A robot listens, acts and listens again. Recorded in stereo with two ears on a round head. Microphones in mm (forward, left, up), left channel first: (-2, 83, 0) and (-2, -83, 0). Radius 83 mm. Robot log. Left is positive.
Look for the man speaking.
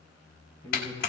cmd yaw +30
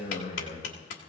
note: So it is at 135° left.
cmd yaw +135
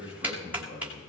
note: The man speaking is now 30° left.
cmd yaw +30
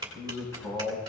note: The man speaking is now 15° left.
cmd yaw +15
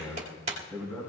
end: Facing the man speaking, over 4 m away.